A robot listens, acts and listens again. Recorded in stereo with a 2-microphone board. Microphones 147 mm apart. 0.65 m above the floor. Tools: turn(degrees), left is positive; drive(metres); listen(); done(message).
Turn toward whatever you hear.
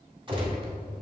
turn(degrees=-30)
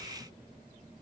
listen()
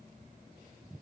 done("I heard a gunshot, but can't make it out now. It was about straight ahead or 120° right.")